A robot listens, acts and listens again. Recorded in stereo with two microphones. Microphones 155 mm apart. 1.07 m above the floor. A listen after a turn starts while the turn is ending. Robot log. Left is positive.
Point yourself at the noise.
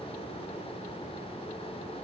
cmd idle
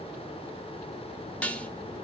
cmd yaw +30
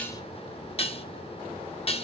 note: So it is at 140° left.
cmd yaw +140
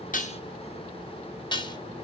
note: The dishes clattering is now 30° left.
cmd yaw +30
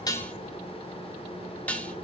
note: The dishes clattering is now 10° left.
cmd yaw +10
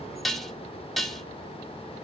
end: Facing the dishes clattering.